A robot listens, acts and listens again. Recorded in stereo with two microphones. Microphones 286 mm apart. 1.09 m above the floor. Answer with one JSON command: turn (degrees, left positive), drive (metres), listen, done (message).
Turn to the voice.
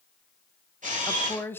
{"turn": 30}
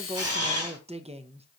{"turn": -25}
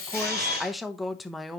{"done": "Found it: a woman speaking, straight ahead."}